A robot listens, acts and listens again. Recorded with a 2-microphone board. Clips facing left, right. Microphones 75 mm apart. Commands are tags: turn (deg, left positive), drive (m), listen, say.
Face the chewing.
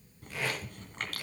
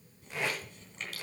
<turn deg="60"/>
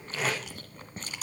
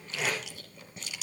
<turn deg="50"/>
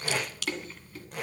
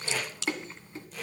<turn deg="-25"/>
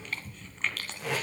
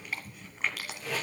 <turn deg="-10"/>
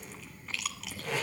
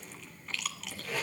<say>Facing the chewing, 1 to 2 m away.</say>